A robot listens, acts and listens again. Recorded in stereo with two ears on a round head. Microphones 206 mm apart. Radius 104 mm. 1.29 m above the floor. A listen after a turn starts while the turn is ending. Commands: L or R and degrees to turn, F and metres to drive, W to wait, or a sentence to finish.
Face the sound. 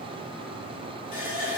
L35
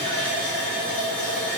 Found it: a running tap, straight ahead, under 1 m away.